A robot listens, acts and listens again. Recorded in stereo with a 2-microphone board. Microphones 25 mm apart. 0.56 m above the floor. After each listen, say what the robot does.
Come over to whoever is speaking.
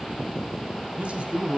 Turn 55° right.
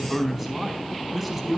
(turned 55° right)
Drive 1.0 m forward.
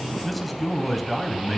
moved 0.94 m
Drive 1.0 m forward.
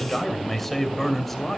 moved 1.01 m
Turn 15° left.
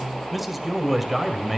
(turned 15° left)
Drive 1.0 m forward.
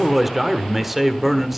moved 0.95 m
Drive 1.0 m forward.
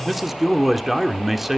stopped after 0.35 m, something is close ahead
I am next to the man speaking.